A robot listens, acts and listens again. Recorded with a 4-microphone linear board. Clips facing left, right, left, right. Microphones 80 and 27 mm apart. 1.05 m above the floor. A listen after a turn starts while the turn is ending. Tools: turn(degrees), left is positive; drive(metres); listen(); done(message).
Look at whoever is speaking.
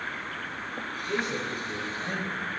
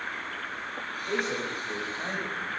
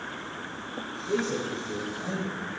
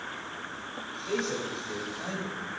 turn(degrees=-70)
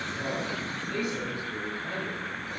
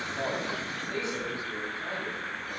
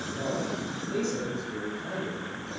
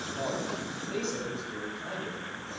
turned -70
turn(degrees=-25)
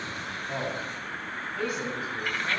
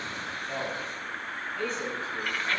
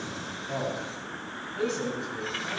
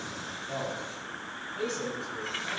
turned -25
turn(degrees=10)
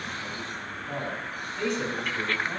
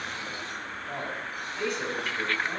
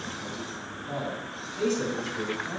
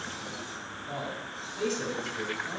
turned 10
done("Found it: a man speaking, straight ahead.")